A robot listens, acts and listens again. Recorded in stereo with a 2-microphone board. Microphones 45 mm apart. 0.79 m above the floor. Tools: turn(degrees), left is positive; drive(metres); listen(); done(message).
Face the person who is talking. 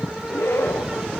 listen()
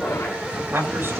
turn(degrees=-65)
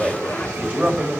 turn(degrees=-35)
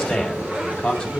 turn(degrees=15)
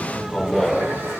listen()
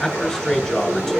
done("Found it: a man speaking, straight ahead.")